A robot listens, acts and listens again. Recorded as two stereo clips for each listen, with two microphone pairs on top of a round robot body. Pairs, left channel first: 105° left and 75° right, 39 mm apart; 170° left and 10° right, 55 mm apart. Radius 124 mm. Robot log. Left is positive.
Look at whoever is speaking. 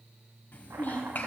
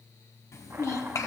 note: The child speaking: 150° left.
cmd yaw +150
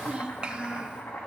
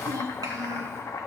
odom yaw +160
note: The child speaking is now 15° right.
cmd yaw -15
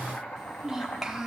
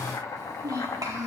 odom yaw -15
end: Facing the child speaking.